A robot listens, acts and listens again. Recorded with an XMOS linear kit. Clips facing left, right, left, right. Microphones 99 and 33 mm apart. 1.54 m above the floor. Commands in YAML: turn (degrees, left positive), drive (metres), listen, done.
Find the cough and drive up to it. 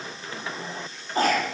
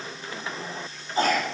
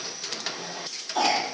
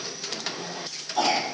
turn: 50
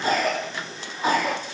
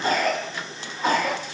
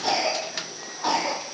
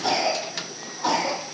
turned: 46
drive: 1.0
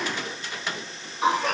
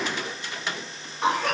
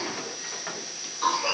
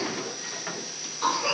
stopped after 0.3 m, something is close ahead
done: "Blocked. The cough is further on, straight ahead."